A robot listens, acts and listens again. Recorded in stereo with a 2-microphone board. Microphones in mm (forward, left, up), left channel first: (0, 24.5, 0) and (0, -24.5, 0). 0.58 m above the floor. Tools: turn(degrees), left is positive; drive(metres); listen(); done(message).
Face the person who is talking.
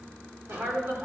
turn(degrees=-50)
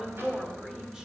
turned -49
turn(degrees=-15)
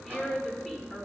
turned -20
done("Found it: a woman speaking, straight ahead, 2 to 4 m away.")